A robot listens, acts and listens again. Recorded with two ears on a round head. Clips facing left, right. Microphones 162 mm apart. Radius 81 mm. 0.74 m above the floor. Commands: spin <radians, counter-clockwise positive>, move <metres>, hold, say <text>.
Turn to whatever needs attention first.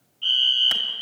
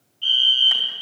spin -0.35
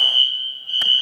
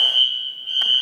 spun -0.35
spin -2.44
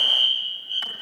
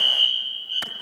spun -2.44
spin 0.26
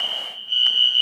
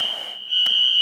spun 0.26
say Found it: a fire alarm, straight ahead, 2 to 4 m away.